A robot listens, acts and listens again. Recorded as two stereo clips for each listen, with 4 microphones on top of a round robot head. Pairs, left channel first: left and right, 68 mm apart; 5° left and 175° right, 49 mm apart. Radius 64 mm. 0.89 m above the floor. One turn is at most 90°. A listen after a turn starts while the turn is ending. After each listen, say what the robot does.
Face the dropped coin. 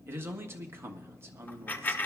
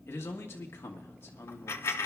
Turn 25° left.
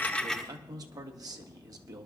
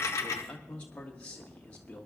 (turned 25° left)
Facing where the dropped coin came from. I can't hear it now.